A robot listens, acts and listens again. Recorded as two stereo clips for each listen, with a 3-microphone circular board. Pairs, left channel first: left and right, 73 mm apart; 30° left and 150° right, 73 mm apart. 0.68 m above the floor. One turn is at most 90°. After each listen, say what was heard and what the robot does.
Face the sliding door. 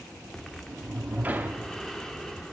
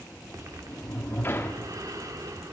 The sliding door: 25° right. Turn 25° right.
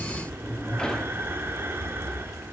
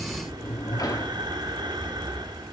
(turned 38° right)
The sliding door is now 10° left. Turn 10° left.
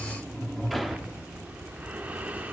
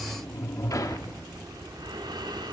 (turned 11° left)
Facing the sliding door, 1 to 2 m away.